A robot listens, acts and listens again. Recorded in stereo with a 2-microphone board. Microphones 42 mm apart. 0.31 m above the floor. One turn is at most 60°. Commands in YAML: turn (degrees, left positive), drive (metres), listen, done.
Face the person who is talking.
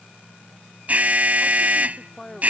turn: 30
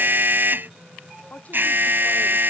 listen: true
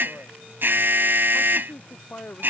turn: 60
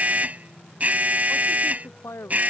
turn: 60
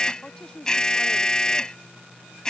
turn: 15
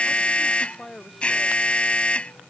done: "Found it: a woman speaking, straight ahead."